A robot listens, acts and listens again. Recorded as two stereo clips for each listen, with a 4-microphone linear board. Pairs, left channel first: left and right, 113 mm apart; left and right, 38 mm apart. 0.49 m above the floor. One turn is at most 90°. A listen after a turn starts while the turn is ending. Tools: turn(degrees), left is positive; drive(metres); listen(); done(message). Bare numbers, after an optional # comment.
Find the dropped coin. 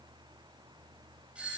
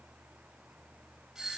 listen()
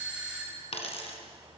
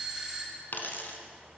# The dropped coin: about 65° left or 115° left.
turn(65)
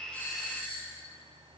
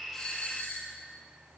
listen()
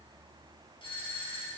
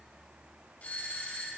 done("I heard a dropped coin, but can't make it out now. It was about straight ahead or 50° left.")